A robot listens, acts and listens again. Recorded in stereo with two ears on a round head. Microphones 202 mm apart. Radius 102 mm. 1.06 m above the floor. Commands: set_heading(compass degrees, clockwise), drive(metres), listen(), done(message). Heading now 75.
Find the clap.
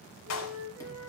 set_heading(345)
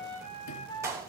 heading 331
set_heading(346)
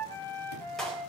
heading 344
done("Found it: a clap, straight ahead, over 4 m away.")